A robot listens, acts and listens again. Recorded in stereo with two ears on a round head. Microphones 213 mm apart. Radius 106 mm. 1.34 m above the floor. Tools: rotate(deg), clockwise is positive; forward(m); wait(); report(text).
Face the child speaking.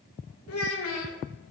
rotate(-65)
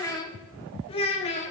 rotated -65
rotate(-30)
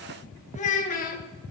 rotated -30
rotate(-35)
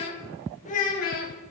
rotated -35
rotate(-40)
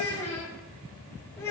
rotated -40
rotate(-10)
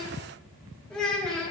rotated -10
report("Found it: a child speaking, straight ahead.")